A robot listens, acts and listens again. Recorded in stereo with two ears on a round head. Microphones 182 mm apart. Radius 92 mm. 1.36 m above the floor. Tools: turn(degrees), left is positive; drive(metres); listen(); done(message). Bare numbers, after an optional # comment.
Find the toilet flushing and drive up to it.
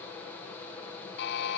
listen()
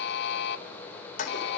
# The toilet flushing: about 40° left or 140° left.
turn(40)
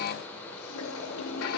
# So it is at 100° left.
turn(100)
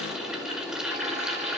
drive(1.0)
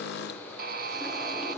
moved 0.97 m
listen()
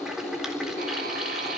drive(1.0)
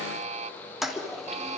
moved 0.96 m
drive(1.0)
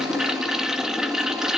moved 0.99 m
drive(1.0)
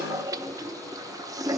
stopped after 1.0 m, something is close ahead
# The toilet flushing is now 15° right.
turn(-15)
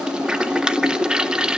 done("Arrived at the toilet flushing, straight ahead.")